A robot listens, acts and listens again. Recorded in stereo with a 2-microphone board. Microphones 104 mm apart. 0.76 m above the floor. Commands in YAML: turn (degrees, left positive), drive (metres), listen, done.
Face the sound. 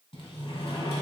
turn: 90
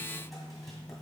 done: "Facing the sliding door."